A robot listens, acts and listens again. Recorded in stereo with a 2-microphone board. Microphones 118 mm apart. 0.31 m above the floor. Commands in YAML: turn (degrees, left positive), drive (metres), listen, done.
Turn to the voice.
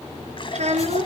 turn: -70
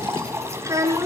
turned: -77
turn: -30
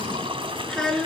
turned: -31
done: "Facing the child speaking, 2 to 4 m away."